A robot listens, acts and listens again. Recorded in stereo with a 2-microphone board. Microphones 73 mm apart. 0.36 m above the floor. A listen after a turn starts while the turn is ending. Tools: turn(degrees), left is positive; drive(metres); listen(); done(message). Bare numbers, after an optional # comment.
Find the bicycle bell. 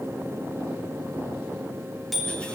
turn(30)
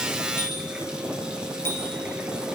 # So it is at 150° left.
turn(150)
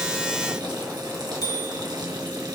# The bicycle bell is now 65° left.
turn(65)
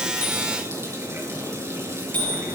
# The bicycle bell is now 25° left.
turn(25)
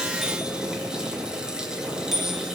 done("Found it: a bicycle bell, straight ahead.")